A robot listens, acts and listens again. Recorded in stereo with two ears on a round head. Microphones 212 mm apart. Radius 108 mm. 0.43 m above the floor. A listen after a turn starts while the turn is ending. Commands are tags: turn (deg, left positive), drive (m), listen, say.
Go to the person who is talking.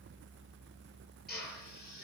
<listen/>
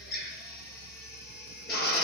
<listen/>
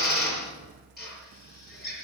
<say>I can't make out anyone speaking, only a drill.</say>